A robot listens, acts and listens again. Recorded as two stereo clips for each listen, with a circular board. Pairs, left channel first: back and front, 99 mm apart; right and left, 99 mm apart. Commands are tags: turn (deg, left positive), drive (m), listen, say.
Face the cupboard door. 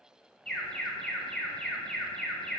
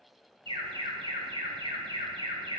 <listen/>
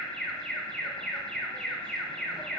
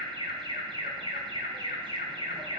<listen/>
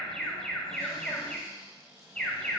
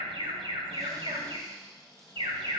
<turn deg="45"/>
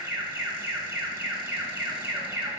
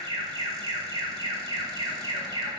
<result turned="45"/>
<listen/>
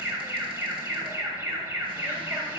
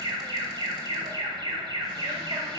<listen/>
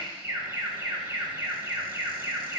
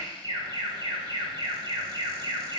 <say>I heard a cupboard door from this way, but can't make it out now.</say>